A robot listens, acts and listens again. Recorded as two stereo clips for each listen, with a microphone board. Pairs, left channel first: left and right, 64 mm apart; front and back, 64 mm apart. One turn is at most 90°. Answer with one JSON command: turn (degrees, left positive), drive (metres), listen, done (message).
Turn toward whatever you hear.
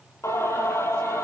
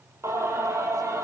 {"turn": 90}
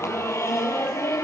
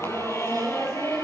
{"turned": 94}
{"turn": 45}
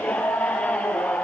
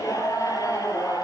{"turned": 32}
{"turn": 20}
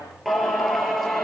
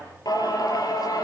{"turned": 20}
{"done": "Found it: singing, straight ahead, over 4 m away."}